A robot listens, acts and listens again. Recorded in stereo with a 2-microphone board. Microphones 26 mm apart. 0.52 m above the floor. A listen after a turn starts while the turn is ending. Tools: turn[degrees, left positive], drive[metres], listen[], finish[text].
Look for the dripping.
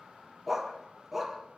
Action: listen[]
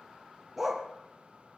Action: listen[]
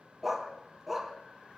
Action: finish[I can't make out dripping to turn to.]